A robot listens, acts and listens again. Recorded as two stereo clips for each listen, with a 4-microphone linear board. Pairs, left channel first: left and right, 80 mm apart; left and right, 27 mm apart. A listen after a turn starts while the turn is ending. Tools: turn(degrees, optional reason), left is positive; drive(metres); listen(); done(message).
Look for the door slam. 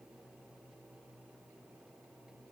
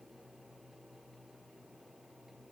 listen()
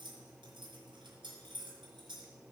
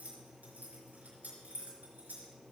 listen()
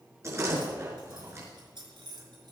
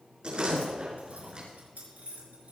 turn(degrees=-35, reason="The door slam: about 35° right or 145° right.")
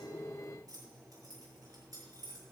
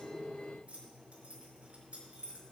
listen()
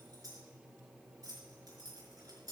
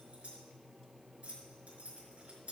done("I heard a door slam, but can't make it out now. It was about straight ahead or 110° right.")